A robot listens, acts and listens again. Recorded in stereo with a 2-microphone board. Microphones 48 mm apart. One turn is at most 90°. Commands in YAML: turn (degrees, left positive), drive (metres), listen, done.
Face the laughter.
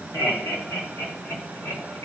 turn: 60
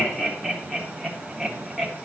done: "Facing the laughter, 1 to 2 m away."